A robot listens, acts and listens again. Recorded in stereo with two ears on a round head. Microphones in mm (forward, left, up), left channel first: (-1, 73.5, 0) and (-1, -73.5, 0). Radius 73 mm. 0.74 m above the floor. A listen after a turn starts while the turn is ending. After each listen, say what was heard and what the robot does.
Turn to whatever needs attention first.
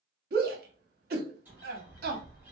The shout: about 60° right or 120° right. Turn 60° right.
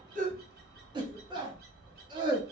So it is at 35° right. Turn 35° right.
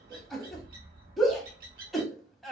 Found it: a shout, straight ahead, 1 to 2 m away.